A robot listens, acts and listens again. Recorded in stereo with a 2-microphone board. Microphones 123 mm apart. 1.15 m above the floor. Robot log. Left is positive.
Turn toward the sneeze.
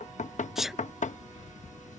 cmd yaw -30
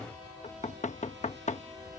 cmd idle
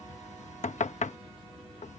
end: I heard a sneeze, but can't make it out now. It was about 25° left or 145° right.